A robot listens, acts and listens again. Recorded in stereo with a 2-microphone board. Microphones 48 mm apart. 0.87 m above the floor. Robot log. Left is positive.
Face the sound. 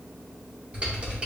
note: The typing on a keyboard: about 25° right or 155° right.
cmd yaw -25
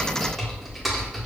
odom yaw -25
end: Found it: typing on a keyboard, straight ahead.